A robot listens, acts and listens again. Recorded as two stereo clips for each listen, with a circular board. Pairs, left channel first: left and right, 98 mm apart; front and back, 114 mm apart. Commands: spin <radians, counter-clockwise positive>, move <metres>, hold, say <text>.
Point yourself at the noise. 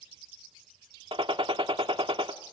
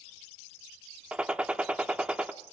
spin -1.75
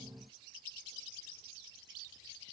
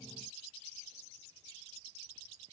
say Facing where the gunshot came from. I can't hear it now.